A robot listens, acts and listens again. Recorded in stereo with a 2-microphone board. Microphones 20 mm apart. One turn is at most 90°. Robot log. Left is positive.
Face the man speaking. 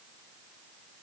cmd idle
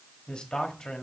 note: The man speaking: about 45° left or 135° left.
cmd yaw +45
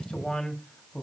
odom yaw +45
note: The man speaking: about 40° left or 140° left.
cmd yaw +40
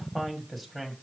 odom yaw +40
end: Facing the man speaking.